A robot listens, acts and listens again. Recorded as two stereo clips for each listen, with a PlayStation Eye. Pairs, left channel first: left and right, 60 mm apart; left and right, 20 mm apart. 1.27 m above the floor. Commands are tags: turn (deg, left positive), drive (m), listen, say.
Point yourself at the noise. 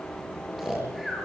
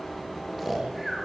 <turn deg="-30"/>
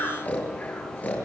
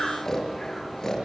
<turn deg="25"/>
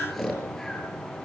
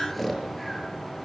<say>Found it: snoring, straight ahead, over 4 m away.</say>